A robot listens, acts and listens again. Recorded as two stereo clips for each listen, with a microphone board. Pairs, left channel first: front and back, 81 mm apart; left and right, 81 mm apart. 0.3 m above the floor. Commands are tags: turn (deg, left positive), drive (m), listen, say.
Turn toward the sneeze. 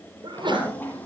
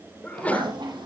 <turn deg="165"/>
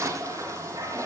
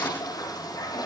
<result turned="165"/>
<say>I heard a sneeze from this way, but can't make it out now.</say>